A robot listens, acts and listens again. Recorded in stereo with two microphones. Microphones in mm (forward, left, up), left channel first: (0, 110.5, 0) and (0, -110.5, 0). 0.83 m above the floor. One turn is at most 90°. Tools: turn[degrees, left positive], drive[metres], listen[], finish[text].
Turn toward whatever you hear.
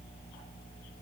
Action: listen[]
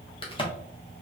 Thought: The crack: about 25° left or 155° left.
Action: turn[25]
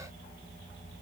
Action: listen[]
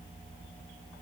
Action: finish[I heard a crack, but can't make it out now. It was about straight ahead or 130° left.]